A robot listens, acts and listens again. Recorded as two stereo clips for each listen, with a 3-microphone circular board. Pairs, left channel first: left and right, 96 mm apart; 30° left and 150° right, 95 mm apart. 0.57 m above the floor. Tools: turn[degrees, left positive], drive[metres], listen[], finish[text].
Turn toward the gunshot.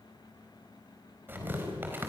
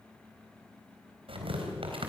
Action: listen[]
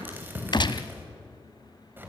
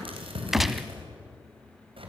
Thought: The gunshot: 125° left.
Action: turn[125]
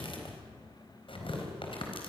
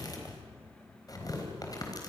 Action: finish[Facing where the gunshot came from. I can't hear it now.]